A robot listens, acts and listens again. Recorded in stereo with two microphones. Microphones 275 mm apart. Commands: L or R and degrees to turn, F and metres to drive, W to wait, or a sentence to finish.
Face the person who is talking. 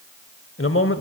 L50
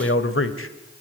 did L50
L65
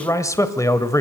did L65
L15
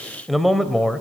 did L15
Found it: a man speaking, straight ahead, 1 to 2 m away.